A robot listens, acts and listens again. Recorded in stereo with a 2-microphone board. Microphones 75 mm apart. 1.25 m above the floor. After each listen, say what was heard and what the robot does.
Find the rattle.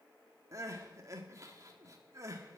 Keep listening.
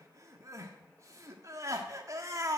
Keep listening.
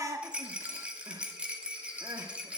The rattle: about 15° right or 165° right. Turn 15° right.
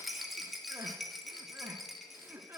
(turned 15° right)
Found it: a rattle, straight ahead, 1 to 2 m away.